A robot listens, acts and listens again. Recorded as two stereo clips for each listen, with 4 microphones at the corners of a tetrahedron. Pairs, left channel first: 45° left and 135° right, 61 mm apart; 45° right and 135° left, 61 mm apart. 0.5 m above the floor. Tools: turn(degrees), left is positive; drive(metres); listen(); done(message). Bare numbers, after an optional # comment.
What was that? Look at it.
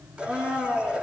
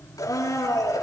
# The blender: 60° right.
turn(-60)
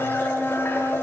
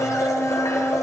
# The blender is now 10° right.
turn(-10)
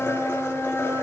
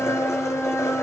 done("Found it: a blender, straight ahead.")